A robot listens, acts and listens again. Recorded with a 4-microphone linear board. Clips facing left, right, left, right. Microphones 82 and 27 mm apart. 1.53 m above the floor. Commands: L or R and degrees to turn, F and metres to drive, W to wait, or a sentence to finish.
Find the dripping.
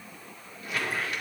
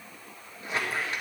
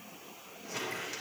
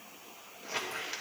W
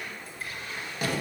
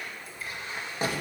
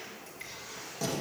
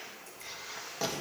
W
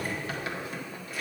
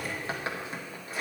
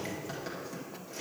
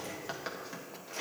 I can't make out dripping to turn to.